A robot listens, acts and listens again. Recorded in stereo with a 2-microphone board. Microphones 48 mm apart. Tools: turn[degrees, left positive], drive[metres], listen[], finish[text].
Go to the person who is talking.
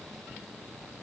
Action: listen[]
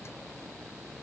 Action: listen[]
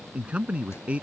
Thought: The man speaking: about 25° right or 155° right.
Action: turn[-25]
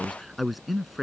Action: drive[1.0]
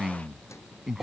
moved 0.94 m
Thought: The man speaking is now 10° right.
Action: turn[-10]
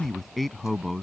Action: drive[1.0]
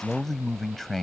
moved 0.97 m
Action: drive[1.0]
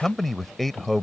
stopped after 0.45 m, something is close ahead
Action: finish[Arrived at the man speaking, straight ahead.]